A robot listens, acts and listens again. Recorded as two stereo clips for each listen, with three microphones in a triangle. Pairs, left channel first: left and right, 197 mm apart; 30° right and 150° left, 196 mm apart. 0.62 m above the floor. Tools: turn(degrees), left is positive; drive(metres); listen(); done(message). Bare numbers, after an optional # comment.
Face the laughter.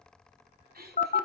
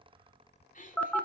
# The laughter: 70° right.
turn(-70)
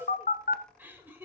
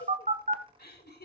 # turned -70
# The laughter is now 10° right.
turn(-10)
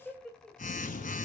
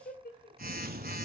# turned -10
done("Facing the laughter.")